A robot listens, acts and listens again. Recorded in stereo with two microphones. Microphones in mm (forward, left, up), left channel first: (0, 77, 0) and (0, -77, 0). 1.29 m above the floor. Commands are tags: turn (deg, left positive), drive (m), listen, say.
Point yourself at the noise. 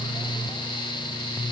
<listen/>
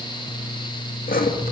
<turn deg="70"/>
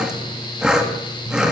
<say>Found it: sawing, straight ahead, 1 to 2 m away.</say>